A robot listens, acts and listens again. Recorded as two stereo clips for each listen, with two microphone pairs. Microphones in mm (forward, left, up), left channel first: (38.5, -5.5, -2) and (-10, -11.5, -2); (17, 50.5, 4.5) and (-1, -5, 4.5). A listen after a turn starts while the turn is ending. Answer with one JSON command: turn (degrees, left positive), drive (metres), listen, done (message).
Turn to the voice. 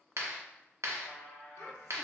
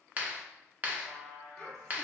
{"turn": -10}
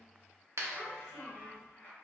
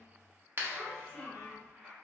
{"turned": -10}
{"done": "Found it: a child speaking, straight ahead, 1 to 2 m away."}